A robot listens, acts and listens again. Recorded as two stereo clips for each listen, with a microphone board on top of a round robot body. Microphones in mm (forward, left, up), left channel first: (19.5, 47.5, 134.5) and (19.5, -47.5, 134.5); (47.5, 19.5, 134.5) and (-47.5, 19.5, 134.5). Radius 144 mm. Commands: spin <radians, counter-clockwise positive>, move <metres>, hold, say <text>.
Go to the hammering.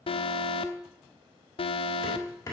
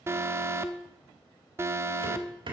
spin 2.62
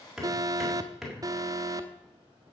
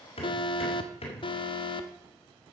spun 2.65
move 1.0
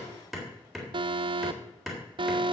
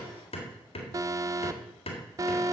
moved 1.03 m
move 1.0
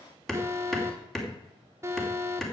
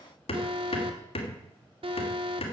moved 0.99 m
move 1.0
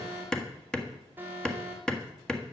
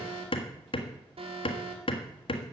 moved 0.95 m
spin 0.17
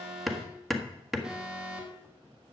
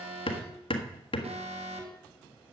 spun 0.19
move 1.0
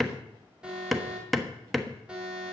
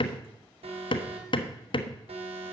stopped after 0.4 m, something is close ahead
say I am next to the hammering.